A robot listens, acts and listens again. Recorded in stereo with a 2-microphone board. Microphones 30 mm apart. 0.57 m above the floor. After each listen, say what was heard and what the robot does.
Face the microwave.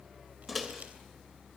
Turn 30° left.
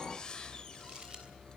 Keep listening.
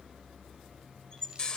So it is at 145° left. Turn 145° left.
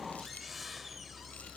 Keep listening.
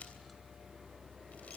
Keep listening.
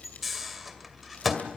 Found it: a microwave, straight ahead, 2 to 4 m away.